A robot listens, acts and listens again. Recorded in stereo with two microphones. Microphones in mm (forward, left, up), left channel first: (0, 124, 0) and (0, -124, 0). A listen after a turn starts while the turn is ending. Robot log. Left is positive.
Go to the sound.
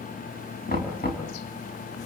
note: The knocking: about 35° left or 145° left.
cmd yaw +35
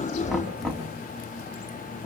cmd fwd 1.0
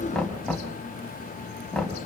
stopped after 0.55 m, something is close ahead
end: Something is in my way. I am facing the knocking but have not reached it.